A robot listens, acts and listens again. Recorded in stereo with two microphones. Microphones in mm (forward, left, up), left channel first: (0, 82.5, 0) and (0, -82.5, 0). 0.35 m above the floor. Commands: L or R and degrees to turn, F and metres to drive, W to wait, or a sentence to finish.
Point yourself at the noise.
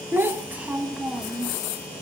L30
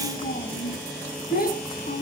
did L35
L110
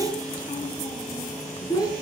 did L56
L20
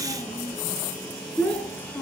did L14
L10
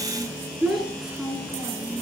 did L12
Facing the child speaking.